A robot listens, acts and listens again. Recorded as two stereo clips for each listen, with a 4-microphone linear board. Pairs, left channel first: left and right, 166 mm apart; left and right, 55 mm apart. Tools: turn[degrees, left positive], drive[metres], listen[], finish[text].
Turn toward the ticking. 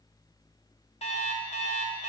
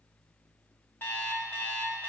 Action: listen[]
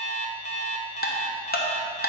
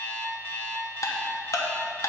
Thought: The ticking: about 70° left or 110° left.
Action: turn[70]
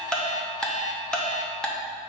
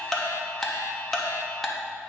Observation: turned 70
Action: finish[Facing the ticking, under 1 m away.]